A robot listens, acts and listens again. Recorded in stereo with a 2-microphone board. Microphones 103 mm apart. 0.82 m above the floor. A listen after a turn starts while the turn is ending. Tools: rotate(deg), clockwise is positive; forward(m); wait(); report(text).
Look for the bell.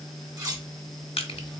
wait()
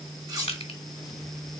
wait()
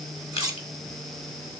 report("I can't make out a bell to turn to.")